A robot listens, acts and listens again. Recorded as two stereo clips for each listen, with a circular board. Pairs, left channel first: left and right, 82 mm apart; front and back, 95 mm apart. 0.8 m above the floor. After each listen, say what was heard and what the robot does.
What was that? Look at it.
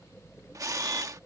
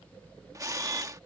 The camera shutter: 130° right. Turn 130° right.
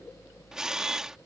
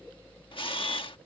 Found it: a camera shutter, straight ahead.